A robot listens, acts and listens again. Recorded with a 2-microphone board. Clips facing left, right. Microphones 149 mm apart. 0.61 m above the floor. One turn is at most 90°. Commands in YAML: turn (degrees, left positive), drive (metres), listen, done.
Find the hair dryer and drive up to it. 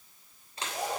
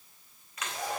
turn: 30
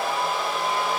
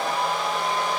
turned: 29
drive: 1.0
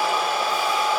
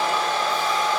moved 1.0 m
turn: 10
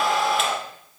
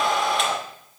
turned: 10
drive: 1.0
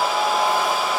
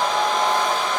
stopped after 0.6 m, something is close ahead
turn: 10
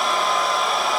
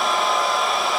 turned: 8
done: "Arrived at the hair dryer, straight ahead."